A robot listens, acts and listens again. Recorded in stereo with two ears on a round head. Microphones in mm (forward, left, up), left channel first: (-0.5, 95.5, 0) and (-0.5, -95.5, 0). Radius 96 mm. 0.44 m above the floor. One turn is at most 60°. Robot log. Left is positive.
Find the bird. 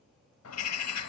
cmd yaw +60
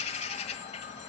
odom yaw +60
note: So it is at 30° left.
cmd yaw +30
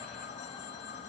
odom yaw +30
note: The bird is now 30° left.
cmd yaw +30
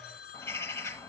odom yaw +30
note: The bird is now 15° left.
cmd yaw +15
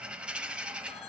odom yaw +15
end: Facing the bird, 1 to 2 m away.